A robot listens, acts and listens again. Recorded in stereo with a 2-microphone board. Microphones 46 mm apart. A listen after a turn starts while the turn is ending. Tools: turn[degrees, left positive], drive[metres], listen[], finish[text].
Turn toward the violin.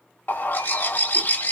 Action: listen[]
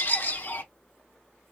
Action: listen[]
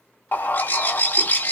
Action: finish[I can't make out a violin to turn to.]